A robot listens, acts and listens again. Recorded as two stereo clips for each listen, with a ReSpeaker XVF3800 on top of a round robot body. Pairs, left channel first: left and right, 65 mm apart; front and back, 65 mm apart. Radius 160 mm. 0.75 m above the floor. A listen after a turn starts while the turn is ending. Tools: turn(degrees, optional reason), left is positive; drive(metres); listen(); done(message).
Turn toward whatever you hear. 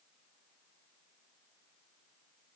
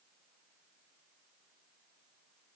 listen()
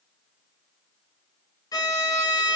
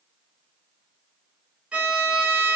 turn(degrees=110, reason="The violin: 110° left.")
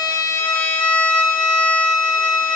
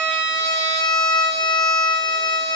turn(degrees=20, reason="The violin is now 20° left.")
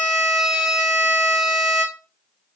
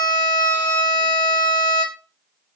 done("Facing the violin, 1 to 2 m away.")